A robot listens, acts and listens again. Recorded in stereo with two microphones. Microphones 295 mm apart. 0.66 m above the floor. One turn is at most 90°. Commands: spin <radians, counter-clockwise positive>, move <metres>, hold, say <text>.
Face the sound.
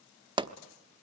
spin -0.26
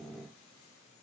hold
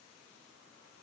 say I heard a pop, but can't make it out now. It was about straight ahead or 150° right.